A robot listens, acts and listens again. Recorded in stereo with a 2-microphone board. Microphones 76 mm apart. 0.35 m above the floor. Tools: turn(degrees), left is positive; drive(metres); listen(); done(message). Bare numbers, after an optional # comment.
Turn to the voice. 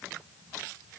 listen()
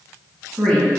turn(30)
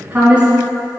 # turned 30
# So it is at 20° right.
turn(-20)
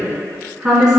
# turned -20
# The woman speaking is now 10° right.
turn(-10)
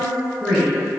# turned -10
done("Facing the woman speaking.")